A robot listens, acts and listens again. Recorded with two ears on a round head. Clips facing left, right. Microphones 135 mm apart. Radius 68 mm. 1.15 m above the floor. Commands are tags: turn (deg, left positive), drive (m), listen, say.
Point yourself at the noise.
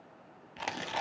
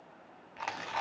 <turn deg="35"/>
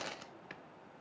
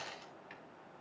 <turn deg="110"/>
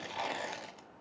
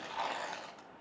<turn deg="25"/>
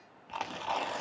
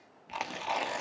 <turn deg="-10"/>
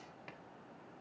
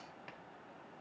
<listen/>
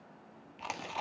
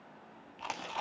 <say>Found it: tearing paper, straight ahead, 1 to 2 m away.</say>